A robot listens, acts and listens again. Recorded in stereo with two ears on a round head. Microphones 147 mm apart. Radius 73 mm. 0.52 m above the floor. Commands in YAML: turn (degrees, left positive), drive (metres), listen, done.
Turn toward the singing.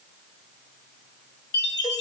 listen: true
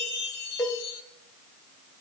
listen: true
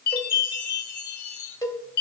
done: "I can't make out singing to turn to."